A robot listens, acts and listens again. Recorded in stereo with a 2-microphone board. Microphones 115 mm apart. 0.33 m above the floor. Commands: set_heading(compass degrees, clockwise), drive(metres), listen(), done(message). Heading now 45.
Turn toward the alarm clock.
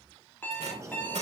set_heading(30)
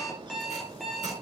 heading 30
done("Found it: an alarm clock, straight ahead, 2 to 4 m away.")